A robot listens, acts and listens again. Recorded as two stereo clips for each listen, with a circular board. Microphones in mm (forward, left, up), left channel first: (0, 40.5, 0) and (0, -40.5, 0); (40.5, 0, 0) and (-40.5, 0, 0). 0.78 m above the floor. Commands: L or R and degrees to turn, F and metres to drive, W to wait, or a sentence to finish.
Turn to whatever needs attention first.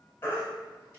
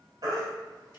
L145
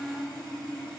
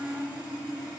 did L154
R10
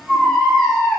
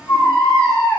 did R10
Facing the baby crying, 2 to 4 m away.